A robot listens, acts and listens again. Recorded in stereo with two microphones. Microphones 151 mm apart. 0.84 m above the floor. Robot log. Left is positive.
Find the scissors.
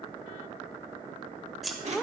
cmd yaw +30
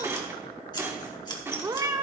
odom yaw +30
note: So it is at 150° left.
cmd yaw +150
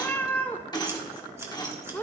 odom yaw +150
note: The scissors is now 20° right.
cmd yaw -20
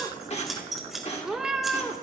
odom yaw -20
end: Found it: scissors, straight ahead.